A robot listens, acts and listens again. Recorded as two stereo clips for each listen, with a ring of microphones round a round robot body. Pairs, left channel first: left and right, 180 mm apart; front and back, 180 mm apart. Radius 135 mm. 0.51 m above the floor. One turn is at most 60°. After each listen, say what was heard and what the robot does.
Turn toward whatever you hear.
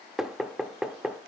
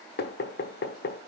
Facing the knocking.